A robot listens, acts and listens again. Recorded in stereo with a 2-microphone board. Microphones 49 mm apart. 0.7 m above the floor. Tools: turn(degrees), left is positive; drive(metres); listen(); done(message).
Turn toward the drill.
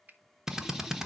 turn(degrees=-30)
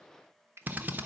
turn(degrees=-145)
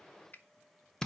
turn(degrees=10)
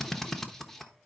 done("Facing the drill, under 1 m away.")